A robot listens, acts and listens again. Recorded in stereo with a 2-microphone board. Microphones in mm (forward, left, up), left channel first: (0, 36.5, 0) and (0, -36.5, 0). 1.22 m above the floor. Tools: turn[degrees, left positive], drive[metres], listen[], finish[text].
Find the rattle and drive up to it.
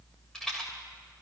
Action: turn[30]
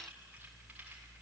Action: listen[]
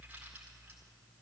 Action: listen[]
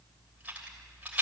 Thought: So it is at 20° right.
Action: turn[-20]
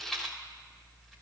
Action: drive[1.0]
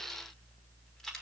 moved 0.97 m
Action: drive[1.0]
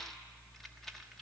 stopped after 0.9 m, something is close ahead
Action: listen[]
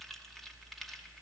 Action: listen[]
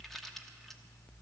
Action: finish[Facing where the rattle came from. I can't hear it now. I did not reach it.]